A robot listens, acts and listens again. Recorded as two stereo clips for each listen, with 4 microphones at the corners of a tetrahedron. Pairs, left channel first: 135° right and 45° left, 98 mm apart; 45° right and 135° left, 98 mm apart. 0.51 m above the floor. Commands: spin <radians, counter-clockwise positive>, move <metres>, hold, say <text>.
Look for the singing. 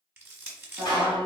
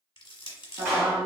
spin 1.57
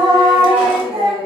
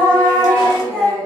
spin 0.70
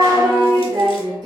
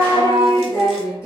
spin 0.26
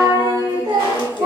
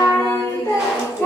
spin 0.26
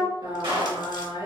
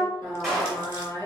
spin 0.17
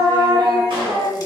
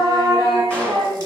say Found it: singing, straight ahead, 2 to 4 m away.